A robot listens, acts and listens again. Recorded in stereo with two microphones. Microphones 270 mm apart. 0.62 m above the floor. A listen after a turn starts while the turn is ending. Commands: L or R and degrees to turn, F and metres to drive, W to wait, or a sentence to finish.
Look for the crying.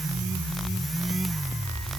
W
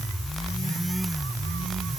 W
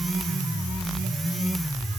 I can't make out crying to turn to.